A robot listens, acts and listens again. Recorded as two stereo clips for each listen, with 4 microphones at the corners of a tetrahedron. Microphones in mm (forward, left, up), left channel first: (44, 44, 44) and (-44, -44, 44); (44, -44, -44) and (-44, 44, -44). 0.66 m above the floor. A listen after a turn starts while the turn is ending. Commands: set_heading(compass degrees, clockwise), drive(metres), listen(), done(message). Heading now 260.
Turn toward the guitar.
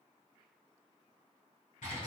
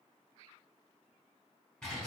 listen()
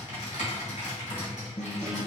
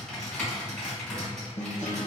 set_heading(275)
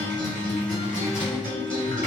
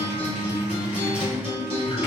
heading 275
done("Found it: a guitar, straight ahead.")